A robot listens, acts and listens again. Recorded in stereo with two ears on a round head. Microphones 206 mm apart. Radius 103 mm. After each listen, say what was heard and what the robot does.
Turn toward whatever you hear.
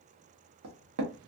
The knocking: about 70° right or 110° right. Turn 70° right.
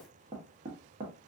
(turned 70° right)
So it is at 30° right. Turn 30° right.
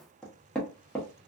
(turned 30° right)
Facing the knocking, 1 to 2 m away.